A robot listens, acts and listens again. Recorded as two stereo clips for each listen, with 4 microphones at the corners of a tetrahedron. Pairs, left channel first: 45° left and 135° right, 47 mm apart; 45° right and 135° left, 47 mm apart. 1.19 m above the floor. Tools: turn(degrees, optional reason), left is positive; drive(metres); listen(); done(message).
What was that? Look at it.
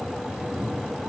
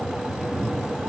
turn(degrees=160, reason="The cat meowing: 160° left.")
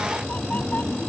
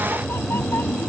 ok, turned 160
turn(degrees=-10, reason="The cat meowing is now 10° right.")
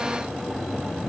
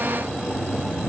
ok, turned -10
done("Found it: a cat meowing, straight ahead.")